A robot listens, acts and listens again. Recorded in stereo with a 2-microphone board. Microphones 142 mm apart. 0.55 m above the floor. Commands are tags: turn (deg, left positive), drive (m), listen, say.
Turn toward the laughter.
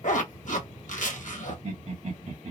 <turn deg="-55"/>
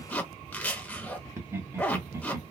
<turn deg="-20"/>
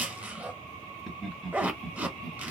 <say>Facing the laughter, 1 to 2 m away.</say>